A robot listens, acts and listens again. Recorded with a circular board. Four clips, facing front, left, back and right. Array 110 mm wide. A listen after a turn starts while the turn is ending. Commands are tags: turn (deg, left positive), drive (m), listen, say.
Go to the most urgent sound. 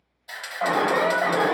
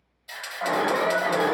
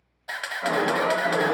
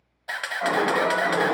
<drive m="1.0"/>
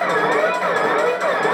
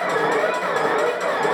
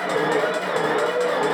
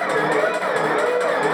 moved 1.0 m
<drive m="1.0"/>
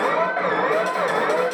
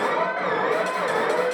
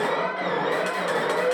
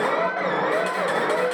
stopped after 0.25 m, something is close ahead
<say>Arrived at the alarm, straight ahead.</say>